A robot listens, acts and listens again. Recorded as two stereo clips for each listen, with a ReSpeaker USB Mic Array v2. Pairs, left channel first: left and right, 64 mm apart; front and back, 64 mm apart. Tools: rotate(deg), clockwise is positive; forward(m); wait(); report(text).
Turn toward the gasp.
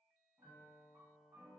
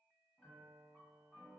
wait()
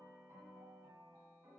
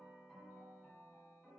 wait()
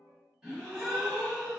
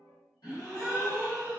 report("Found it: a gasp, straight ahead, 1 to 2 m away.")